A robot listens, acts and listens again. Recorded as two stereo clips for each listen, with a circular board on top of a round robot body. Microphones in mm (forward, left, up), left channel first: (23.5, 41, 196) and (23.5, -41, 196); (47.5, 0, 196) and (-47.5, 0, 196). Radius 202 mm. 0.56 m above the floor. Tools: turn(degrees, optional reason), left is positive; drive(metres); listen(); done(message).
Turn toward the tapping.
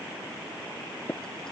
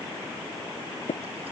turn(degrees=25, reason="The tapping: 25° left.")
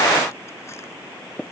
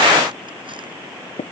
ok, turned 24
done("Facing the tapping.")